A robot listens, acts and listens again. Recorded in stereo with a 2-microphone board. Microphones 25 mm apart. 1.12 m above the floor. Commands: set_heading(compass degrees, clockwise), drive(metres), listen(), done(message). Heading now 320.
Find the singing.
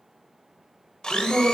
set_heading(270)
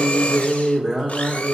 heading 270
set_heading(290)
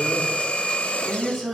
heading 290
set_heading(305)
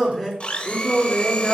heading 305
set_heading(320)
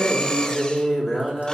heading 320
done("Found it: singing, straight ahead, 2 to 4 m away.")